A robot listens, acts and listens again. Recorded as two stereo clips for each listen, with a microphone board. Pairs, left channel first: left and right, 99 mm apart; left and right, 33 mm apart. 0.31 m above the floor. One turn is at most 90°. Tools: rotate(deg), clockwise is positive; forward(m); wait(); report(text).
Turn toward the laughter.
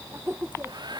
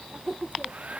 rotate(20)
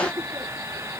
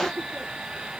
wait()
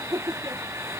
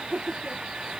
rotate(40)
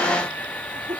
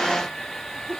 rotate(90)
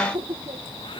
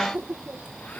rotate(60)
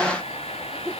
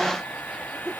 rotate(25)
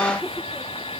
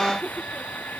wait()
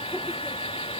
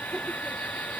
wait()
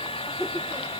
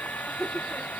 report("Found it: laughter, straight ahead.")